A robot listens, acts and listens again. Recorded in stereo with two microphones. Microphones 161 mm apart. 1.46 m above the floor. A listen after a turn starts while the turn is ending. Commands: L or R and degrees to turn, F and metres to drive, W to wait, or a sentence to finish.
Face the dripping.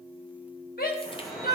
L30
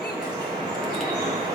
R30
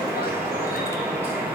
R15
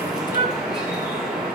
Found it: dripping, straight ahead.